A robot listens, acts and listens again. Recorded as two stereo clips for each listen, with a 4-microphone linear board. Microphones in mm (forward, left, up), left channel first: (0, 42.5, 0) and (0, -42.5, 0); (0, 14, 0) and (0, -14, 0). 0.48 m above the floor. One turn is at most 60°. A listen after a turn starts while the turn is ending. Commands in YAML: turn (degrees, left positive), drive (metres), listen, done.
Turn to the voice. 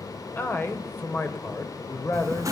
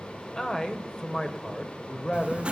turn: 25
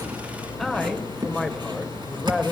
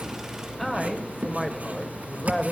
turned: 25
done: "Facing the man speaking."